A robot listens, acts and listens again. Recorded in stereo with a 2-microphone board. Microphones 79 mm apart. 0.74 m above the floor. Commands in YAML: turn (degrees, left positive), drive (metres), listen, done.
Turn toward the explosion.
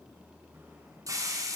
listen: true
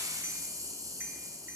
listen: true
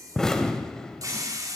turn: 30
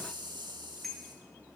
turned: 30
listen: true
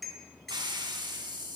done: "I heard an explosion, but can't make it out now. It was about 20° right or 140° left."